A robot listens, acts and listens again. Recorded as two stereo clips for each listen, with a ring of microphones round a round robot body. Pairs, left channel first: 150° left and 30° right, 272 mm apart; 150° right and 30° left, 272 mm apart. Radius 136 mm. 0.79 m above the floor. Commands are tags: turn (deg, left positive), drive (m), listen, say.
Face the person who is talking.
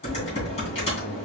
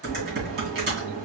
<listen/>
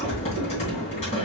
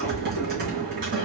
<listen/>
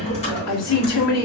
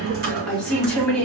<turn deg="125"/>
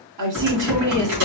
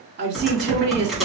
<turn deg="-20"/>
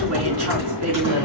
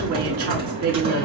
<listen/>
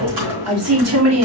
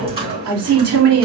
<say>Facing the woman speaking.</say>